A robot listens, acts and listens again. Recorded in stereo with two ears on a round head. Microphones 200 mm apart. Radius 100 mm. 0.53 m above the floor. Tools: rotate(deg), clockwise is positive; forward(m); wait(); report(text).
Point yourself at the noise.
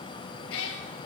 rotate(-65)
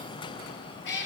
rotate(-55)
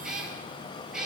report("Found it: a cat meowing, straight ahead, 2 to 4 m away.")